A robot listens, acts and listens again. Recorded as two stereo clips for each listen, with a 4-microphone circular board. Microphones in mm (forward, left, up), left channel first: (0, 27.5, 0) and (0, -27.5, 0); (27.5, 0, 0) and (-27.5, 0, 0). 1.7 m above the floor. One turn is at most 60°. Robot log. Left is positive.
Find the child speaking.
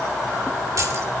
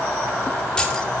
cmd idle
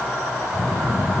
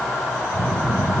note: The child speaking: 175° left.
cmd yaw +60
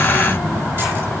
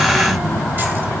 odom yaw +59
note: The child speaking is now 120° left.
cmd yaw +60
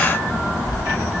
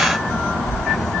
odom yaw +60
note: The child speaking is now 60° left.
cmd yaw +60
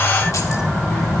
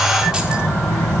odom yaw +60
end: Found it: a child speaking, straight ahead.